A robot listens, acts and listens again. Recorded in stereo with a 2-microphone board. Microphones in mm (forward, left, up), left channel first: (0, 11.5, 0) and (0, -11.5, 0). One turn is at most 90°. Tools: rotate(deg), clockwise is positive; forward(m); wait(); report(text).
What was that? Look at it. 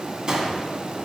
rotate(35)
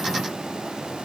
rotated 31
wait()
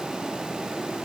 report("I heard a gunshot, but can't make it out now. It was about 5° right or 115° right.")